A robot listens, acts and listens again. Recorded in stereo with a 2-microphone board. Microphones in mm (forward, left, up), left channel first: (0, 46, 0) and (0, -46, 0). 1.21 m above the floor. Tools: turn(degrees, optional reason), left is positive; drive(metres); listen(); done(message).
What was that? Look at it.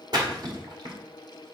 turn(degrees=-50, reason="The splash: about 50° right or 130° right.")
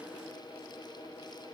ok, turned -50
listen()
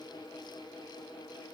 done("I heard a splash, but can't make it out now. It was about straight ahead or 80° right.")